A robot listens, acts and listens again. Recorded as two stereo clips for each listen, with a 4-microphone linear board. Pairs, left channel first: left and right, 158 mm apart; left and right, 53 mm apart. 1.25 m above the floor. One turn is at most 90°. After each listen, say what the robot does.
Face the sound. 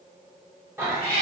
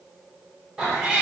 Turn 25° right.
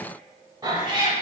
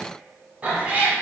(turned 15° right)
Turn 30° right.
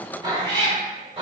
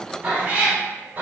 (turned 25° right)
Turn 40° right.
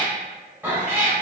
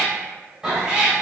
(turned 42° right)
Turn 20° right.
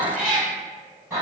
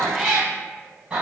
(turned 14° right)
Turn 20° right.
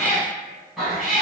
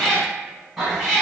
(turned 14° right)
Found it: a cat meowing, straight ahead, 2 to 4 m away.